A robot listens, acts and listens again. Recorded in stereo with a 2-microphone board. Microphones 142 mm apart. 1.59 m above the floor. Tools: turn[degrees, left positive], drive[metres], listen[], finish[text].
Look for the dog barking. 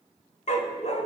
Thought: The dog barking: about 50° left or 130° left.
Action: turn[50]
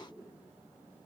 Action: listen[]
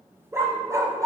Thought: So it is at 25° right.
Action: turn[-25]
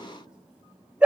Thought: The dog barking is now 10° right.
Action: turn[-10]
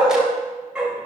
Action: finish[Found it: a dog barking, straight ahead, 2 to 4 m away.]